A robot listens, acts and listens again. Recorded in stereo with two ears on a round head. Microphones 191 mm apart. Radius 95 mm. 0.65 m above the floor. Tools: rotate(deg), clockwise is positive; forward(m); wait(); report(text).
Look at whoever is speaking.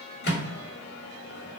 wait()
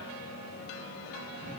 wait()
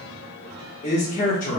rotate(-40)
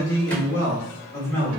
rotate(-15)
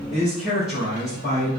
report("Facing the man speaking.")